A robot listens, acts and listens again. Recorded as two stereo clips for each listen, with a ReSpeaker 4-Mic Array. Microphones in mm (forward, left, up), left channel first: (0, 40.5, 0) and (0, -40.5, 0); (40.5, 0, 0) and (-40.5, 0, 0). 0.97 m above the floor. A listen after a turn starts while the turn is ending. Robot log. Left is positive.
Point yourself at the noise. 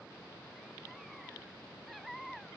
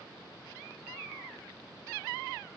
cmd idle
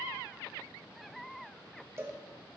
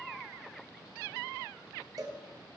note: The cowbell: 145° right.
cmd yaw -145
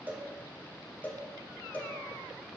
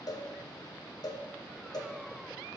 note: The cowbell is now 25° left.
cmd yaw +25
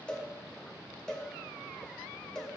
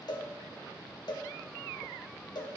note: The cowbell is now 10° left.
cmd yaw +10
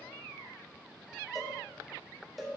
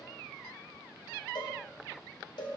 end: Facing the cowbell, 1 to 2 m away.